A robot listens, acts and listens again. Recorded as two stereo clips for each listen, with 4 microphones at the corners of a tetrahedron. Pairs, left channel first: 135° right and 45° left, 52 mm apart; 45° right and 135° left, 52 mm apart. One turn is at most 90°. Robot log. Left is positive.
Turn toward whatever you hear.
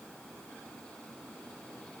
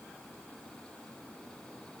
cmd idle
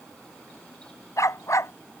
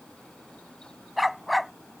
note: The dog barking: 135° right.
cmd yaw -90
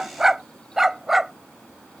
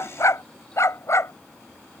note: The dog barking is now 40° right.
cmd yaw -40
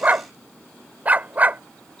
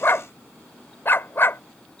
note: The dog barking is now 10° right.
cmd yaw -10
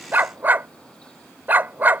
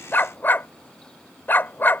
end: Found it: a dog barking, straight ahead.